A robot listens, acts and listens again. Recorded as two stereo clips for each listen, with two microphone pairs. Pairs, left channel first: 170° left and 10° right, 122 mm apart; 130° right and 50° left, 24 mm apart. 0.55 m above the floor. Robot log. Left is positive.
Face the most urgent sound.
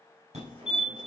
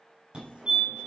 end: Facing the fire alarm, over 4 m away.